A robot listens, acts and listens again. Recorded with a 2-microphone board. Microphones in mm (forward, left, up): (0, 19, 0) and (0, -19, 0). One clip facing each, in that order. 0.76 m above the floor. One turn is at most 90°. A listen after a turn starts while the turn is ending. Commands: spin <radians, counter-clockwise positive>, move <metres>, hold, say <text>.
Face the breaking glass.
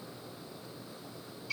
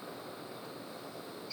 hold
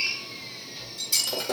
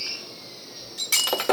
spin -1.13
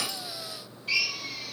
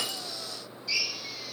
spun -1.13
hold
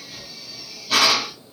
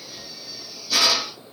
say I heard breaking glass, but can't make it out now. It was about straight ahead or 50° right.